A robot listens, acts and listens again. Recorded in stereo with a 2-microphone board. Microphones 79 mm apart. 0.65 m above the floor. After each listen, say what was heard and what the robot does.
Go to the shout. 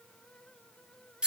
Keep listening.
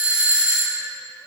Keep listening.
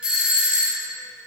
I can't make out a shout to turn to.